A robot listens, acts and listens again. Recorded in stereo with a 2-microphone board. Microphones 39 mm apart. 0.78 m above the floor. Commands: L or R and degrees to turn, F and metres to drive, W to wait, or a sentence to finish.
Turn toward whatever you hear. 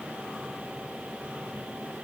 W
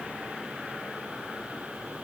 W
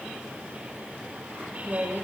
R55
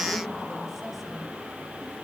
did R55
W
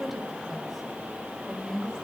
Found it: a woman speaking, straight ahead.